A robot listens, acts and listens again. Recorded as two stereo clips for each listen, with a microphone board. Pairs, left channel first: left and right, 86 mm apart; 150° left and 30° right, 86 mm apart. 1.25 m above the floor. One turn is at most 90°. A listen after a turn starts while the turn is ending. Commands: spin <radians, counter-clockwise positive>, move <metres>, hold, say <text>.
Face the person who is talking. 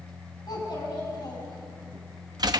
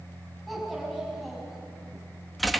spin 1.05
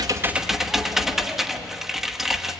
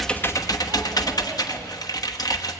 hold
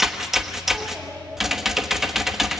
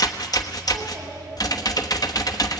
hold
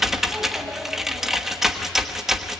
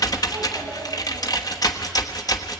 say Facing where the child speaking came from. I can't hear it now.